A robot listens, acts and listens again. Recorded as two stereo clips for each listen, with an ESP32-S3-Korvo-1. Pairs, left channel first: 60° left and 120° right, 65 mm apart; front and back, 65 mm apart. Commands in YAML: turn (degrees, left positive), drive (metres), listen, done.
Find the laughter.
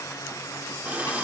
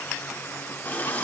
listen: true
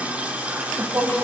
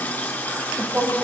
turn: -135
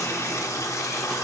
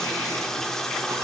listen: true
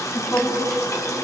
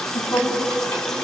turn: 15
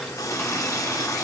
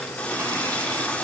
listen: true
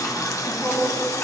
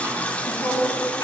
done: "Found it: laughter, straight ahead."